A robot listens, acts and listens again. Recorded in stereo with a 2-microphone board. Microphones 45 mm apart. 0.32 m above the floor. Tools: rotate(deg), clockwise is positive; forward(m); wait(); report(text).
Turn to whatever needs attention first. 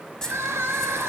rotate(70)
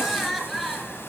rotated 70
report("Facing the crying.")